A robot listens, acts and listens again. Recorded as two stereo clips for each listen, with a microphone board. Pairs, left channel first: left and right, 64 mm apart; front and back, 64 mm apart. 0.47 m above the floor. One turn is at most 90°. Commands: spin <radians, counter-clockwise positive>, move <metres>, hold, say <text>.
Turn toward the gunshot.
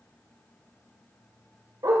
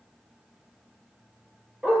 hold
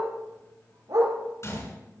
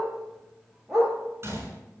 spin 1.57
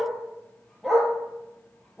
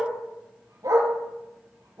spin 0.70
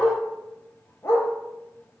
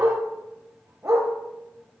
say Facing where the gunshot came from. I can't hear it now.